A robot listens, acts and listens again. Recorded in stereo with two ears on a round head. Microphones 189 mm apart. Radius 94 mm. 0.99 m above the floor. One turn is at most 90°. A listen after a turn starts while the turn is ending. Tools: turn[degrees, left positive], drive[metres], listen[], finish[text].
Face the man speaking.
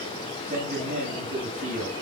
Thought: The man speaking: about 35° right or 145° right.
Action: turn[-35]
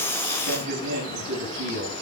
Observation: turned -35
Thought: So it is at 115° right.
Action: turn[-90]
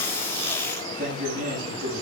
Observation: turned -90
Thought: The man speaking is now 40° right.
Action: turn[-40]
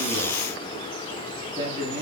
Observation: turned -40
Thought: The man speaking is now 20° right.
Action: turn[-20]
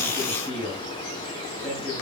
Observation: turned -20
Action: finish[Found it: a man speaking, straight ahead, over 4 m away.]